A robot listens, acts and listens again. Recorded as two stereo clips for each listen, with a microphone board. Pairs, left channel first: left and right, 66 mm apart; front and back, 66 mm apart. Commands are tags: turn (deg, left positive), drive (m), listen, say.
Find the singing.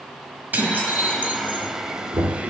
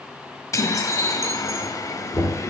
<turn deg="-20"/>
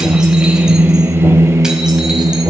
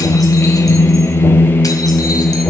<turn deg="-65"/>
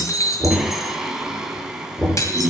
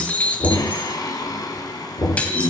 <turn deg="-10"/>
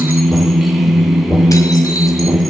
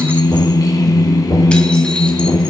<say>Found it: singing, straight ahead, 2 to 4 m away.</say>